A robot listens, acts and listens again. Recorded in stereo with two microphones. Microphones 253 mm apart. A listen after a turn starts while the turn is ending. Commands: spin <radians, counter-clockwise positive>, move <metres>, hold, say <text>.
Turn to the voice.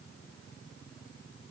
hold
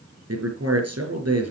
spin -1.31
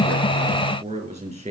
spin -0.52
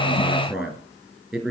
say Found it: a man speaking, straight ahead.